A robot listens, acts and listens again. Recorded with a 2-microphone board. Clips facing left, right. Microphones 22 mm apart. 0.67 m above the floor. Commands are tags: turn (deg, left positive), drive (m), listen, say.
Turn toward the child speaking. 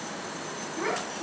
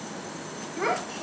<turn deg="-70"/>
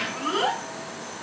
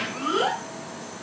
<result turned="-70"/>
<turn deg="-20"/>
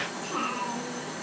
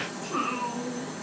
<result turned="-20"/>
<turn deg="-20"/>
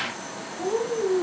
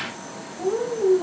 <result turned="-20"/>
<turn deg="-20"/>
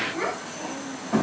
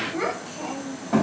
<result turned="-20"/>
<turn deg="-10"/>
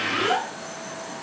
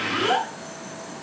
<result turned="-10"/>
<say>Facing the child speaking.</say>